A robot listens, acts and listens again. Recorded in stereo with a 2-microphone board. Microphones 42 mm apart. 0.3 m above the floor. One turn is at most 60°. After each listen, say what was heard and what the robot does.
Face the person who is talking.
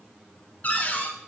Keep listening.
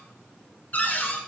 Keep listening.
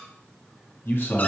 The man speaking: about 55° left or 125° left. Turn 55° left.
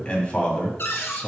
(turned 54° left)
So it is at 35° left. Turn 35° left.
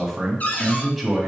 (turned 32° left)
Found it: a man speaking, straight ahead.